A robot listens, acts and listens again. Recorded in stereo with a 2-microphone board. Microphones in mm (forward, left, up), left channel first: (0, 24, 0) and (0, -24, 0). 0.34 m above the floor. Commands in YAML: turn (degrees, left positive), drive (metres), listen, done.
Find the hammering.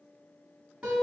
listen: true
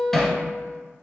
turn: 30
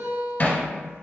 turn: 140
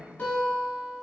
listen: true
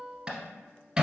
turn: -20
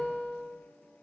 listen: true
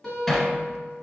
done: "Facing the hammering, 1 to 2 m away."